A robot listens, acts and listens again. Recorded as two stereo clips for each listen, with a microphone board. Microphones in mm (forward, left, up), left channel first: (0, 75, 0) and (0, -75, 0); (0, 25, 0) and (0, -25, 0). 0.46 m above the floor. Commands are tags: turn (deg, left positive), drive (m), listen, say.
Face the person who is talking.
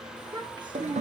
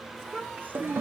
<turn deg="-30"/>
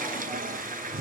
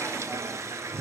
<listen/>
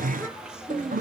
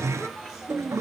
<say>Facing the child speaking.</say>